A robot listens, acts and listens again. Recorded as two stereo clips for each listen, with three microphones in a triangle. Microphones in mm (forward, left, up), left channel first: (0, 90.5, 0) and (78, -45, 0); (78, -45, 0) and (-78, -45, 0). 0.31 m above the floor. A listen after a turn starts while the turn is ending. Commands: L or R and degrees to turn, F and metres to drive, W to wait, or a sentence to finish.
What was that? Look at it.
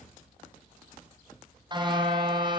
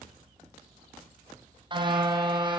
R120
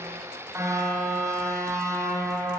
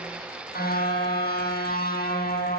L10
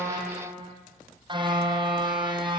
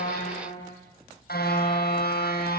Found it: a car horn, straight ahead.